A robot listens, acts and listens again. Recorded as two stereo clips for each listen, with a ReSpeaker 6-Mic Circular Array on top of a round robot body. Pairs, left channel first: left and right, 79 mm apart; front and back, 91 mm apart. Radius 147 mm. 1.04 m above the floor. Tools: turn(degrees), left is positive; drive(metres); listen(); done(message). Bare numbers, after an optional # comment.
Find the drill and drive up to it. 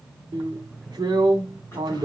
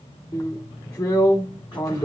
# The drill: 55° right.
turn(-55)
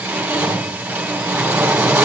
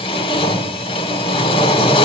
# The drill is now 15° right.
turn(-15)
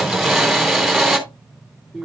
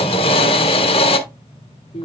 drive(1.0)
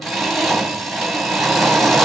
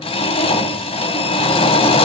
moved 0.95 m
drive(1.0)
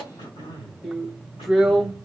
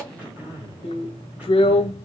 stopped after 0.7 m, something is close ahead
done("I am next to the drill.")